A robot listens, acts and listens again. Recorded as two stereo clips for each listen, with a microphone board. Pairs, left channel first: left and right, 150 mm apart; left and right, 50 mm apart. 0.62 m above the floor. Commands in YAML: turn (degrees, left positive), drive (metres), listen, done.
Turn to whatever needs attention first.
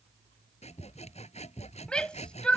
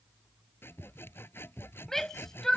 turn: 30
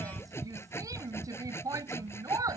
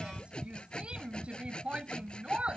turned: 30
turn: -25
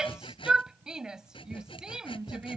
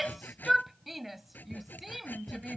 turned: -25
done: "Found it: a shout, straight ahead."